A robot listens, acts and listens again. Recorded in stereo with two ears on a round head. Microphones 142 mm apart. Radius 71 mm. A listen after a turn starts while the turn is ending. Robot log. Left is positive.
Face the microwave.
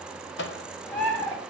cmd yaw +90
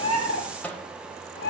note: So it is at 10° left.
cmd yaw +10
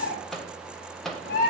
end: Found it: a microwave, straight ahead, under 1 m away.